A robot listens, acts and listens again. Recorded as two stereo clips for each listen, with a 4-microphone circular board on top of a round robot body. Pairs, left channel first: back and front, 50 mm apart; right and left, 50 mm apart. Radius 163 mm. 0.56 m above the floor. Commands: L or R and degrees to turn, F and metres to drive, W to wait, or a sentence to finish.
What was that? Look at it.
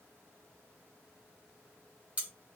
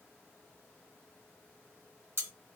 L60
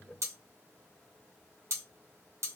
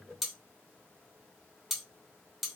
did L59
Found it: cutlery clinking, straight ahead.